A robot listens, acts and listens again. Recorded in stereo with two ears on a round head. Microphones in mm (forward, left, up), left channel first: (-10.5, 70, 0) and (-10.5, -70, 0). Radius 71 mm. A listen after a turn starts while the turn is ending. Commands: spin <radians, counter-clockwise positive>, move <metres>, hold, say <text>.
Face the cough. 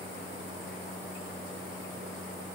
hold
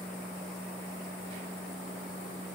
hold
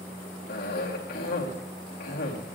spin 1.22
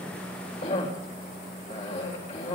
spin 0.70
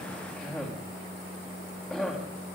say Facing the cough, 2 to 4 m away.